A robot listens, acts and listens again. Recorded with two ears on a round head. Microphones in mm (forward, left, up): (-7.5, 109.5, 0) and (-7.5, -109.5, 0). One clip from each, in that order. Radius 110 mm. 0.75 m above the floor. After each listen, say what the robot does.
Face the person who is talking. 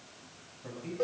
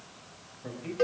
Turn 25° right.
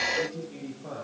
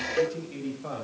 Turn 130° right.
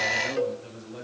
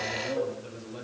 Facing the man speaking, over 4 m away.